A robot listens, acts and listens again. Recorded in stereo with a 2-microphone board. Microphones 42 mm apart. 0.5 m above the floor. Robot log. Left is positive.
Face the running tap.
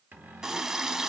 note: The running tap: about 20° right or 160° right.
cmd yaw -20
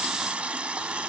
note: So it is at 135° right.
cmd yaw -135
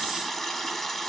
note: The running tap is now 15° left.
cmd yaw +15
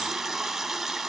end: Facing the running tap, 1 to 2 m away.